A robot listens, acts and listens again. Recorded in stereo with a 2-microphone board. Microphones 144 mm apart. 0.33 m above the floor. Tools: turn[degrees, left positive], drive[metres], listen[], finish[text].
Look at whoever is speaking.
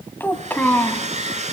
Action: turn[30]
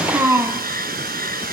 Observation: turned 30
Thought: So it is at 15° right.
Action: turn[-15]
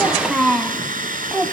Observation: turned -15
Action: finish[Facing the child speaking.]